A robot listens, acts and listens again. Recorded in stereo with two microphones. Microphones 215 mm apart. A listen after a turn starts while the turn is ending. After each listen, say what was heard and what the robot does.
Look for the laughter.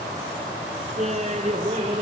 The laughter: about 30° right or 150° right. Turn 30° right.
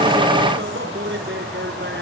So it is at 120° right. Turn 120° right.
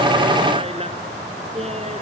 The laughter is now 30° right. Turn 30° right.
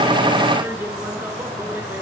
The laughter is now 10° right. Turn 10° right.
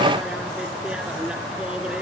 Keep listening.
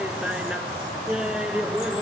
Found it: laughter, straight ahead.